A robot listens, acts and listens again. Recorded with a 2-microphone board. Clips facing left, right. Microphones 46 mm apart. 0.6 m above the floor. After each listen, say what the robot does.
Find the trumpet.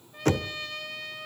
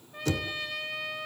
Turn 30° right.
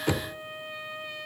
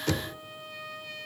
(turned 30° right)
Turn 20° left.
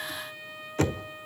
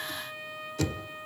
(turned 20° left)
Facing the trumpet, 2 to 4 m away.